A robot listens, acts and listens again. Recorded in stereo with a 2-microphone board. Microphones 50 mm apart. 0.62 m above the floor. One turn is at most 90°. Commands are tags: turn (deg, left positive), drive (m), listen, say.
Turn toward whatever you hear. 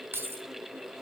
<turn deg="-50"/>
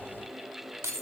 <turn deg="-75"/>
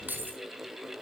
<turn deg="-35"/>
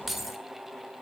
<say>Facing the keys jangling, 1 to 2 m away.</say>